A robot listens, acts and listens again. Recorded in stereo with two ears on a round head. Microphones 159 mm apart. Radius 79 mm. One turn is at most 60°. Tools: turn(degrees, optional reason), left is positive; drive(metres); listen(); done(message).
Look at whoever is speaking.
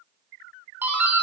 listen()
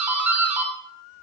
listen()
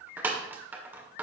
done("I can't make out anyone speaking to turn to.")